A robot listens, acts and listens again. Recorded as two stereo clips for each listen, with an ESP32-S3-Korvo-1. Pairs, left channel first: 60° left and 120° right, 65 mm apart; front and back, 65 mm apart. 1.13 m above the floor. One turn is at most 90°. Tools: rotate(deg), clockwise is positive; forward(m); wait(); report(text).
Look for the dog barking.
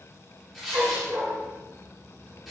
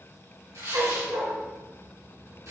rotate(90)
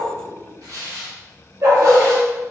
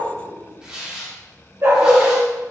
rotate(90)
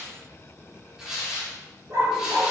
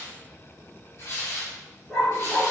rotate(85)
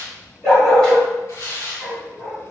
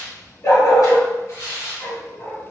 rotate(15)
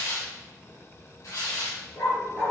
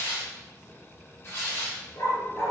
report("Found it: a dog barking, straight ahead.")